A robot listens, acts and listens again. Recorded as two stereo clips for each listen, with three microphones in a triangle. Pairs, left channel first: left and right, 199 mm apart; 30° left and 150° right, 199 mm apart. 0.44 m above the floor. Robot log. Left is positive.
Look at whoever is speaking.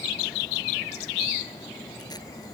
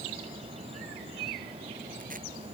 cmd idle
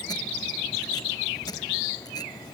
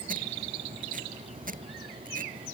cmd idle
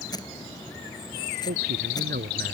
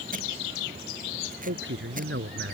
note: The man speaking: 130° right.
cmd yaw -130
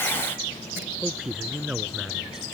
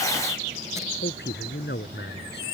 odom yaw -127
end: Found it: a man speaking, straight ahead.